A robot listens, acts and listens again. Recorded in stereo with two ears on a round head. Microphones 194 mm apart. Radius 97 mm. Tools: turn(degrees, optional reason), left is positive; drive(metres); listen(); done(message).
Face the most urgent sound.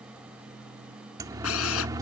turn(degrees=-15, reason="The siren: about 15° right or 165° right.")
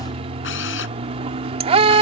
turn(degrees=-150, reason="So it is at 150° right.")
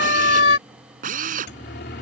turn(degrees=50, reason="The siren is now 50° left.")
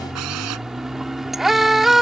done("Facing the siren.")